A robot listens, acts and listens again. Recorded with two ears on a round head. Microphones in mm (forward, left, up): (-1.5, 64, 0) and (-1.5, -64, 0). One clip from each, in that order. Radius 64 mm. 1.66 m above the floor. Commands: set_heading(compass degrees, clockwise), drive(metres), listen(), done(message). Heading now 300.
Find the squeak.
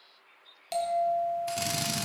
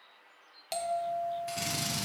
listen()
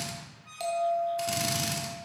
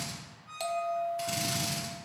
set_heading(230)
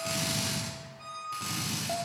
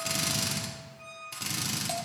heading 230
done("Found it: a squeak, straight ahead.")